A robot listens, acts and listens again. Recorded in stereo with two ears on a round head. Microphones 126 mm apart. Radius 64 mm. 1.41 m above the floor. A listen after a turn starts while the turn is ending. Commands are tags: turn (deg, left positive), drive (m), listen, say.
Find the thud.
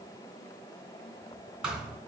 <turn deg="-30"/>
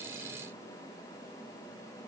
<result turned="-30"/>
<listen/>
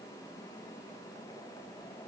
<say>I heard a thud, but can't make it out now. It was about 25° left or 145° right.</say>